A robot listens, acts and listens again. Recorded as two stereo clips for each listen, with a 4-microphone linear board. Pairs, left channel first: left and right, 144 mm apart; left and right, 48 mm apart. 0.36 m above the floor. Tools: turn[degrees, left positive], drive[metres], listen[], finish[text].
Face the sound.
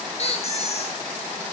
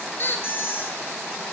Thought: The squeak: about 50° left or 130° left.
Action: turn[50]
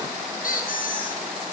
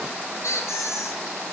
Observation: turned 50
Thought: So it is at 80° left.
Action: turn[80]
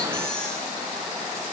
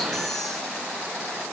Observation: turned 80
Action: listen[]
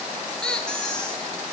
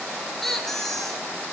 Action: finish[Found it: a squeak, straight ahead.]